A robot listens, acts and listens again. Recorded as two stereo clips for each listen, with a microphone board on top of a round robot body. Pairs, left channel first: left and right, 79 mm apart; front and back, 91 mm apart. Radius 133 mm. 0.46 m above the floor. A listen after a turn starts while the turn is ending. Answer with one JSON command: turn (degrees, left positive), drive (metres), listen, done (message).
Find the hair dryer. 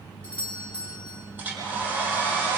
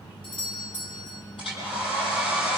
{"turn": -25}
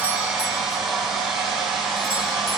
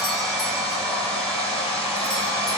{"done": "Found it: a hair dryer, straight ahead, over 4 m away."}